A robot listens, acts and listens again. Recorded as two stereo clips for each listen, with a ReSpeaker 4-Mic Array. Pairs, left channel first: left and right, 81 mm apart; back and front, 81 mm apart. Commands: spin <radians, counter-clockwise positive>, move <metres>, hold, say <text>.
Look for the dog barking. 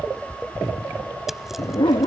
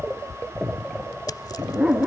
spin 1.40
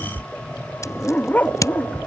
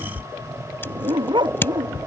spin 0.35
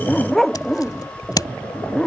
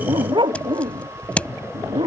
say Facing the dog barking.